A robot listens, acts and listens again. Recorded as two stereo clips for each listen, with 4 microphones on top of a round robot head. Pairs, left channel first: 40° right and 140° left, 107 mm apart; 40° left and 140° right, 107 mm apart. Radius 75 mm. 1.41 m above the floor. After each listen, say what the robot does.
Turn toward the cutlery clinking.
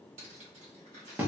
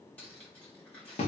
Turn 115° left.
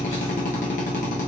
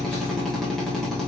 Keep listening.
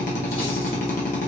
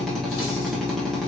Keep listening.
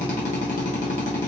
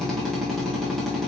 Facing where the cutlery clinking came from. I can't hear it now.